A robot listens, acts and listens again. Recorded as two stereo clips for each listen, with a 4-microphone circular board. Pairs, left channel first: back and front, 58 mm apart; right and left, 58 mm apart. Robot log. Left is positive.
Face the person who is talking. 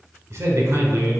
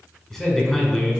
note: The man speaking: 10° right.
cmd yaw -10
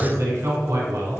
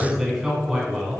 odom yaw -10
end: Found it: a man speaking, straight ahead.